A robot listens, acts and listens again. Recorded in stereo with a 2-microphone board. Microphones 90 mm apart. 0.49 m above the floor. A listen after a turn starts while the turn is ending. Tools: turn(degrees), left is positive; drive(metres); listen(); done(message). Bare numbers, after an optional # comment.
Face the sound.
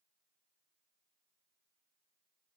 listen()
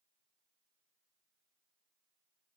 listen()
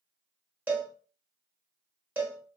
# The cowbell: about 20° right or 160° right.
turn(-20)
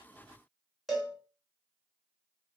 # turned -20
done("Facing the cowbell.")